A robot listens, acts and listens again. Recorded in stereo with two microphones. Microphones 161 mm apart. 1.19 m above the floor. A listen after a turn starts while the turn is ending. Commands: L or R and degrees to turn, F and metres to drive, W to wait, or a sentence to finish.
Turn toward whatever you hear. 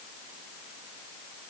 W
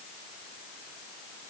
W
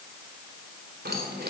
R90
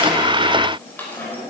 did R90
L15
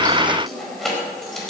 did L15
Facing the keys jangling.